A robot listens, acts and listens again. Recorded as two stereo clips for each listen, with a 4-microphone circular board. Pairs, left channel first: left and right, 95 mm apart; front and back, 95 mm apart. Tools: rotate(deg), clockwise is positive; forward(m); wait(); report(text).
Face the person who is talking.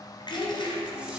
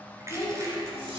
rotate(-45)
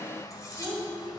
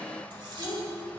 report("Found it: a child speaking, straight ahead.")